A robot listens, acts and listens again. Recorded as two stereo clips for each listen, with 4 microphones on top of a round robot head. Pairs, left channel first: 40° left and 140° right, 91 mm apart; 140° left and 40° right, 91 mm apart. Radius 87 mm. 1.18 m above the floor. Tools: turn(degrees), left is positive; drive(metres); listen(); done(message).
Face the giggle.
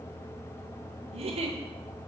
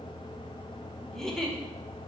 turn(degrees=-135)
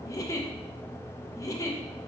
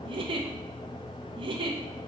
turn(degrees=-15)
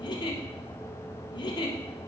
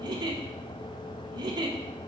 done("Facing the giggle.")